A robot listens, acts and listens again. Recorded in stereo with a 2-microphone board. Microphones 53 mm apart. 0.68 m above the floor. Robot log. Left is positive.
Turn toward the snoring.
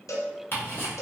cmd idle
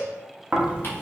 note: The snoring: about 25° right or 155° right.
cmd yaw -25
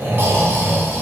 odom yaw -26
note: So it is at 125° right.
cmd yaw -125
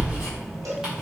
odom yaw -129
end: Found it: snoring, straight ahead.